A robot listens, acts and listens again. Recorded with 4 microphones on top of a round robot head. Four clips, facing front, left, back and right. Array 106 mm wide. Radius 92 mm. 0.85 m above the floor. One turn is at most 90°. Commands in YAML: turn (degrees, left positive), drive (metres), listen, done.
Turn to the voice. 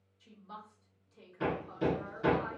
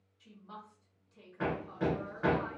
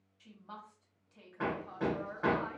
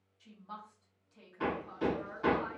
turn: -90
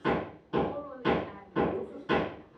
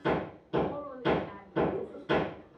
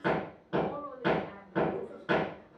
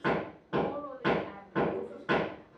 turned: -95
turn: -80
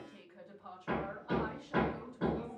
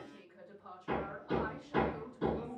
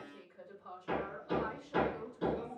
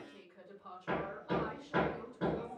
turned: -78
done: "Found it: a woman speaking, straight ahead, 2 to 4 m away."